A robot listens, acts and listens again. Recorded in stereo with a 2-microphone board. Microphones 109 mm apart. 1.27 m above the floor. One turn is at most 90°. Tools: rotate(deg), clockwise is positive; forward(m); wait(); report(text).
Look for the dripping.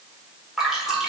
rotate(30)
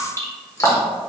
rotate(-30)
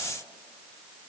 wait()
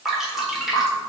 report("Facing the dripping, 1 to 2 m away.")